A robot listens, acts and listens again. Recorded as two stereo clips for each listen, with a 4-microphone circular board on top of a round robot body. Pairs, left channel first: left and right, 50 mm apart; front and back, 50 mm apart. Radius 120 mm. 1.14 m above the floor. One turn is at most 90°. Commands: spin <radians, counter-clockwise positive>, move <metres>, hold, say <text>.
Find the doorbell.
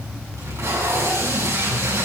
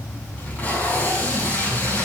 hold
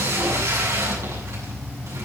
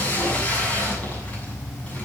hold
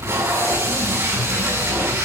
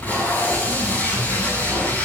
say I can't make out a doorbell, only tape being pulled.